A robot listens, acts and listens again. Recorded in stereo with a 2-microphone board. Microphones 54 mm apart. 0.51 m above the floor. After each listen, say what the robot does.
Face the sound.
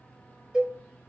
Turn 30° right.
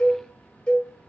Turn 15° left.
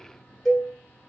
Facing the cowbell, 1 to 2 m away.